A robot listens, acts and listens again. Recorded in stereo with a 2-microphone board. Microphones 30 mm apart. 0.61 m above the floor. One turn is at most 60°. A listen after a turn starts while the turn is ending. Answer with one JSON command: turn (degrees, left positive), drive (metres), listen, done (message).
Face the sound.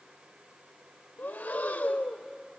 {"turn": 60}
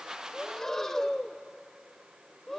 {"turn": 10}
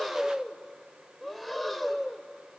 {"done": "Facing the breathing."}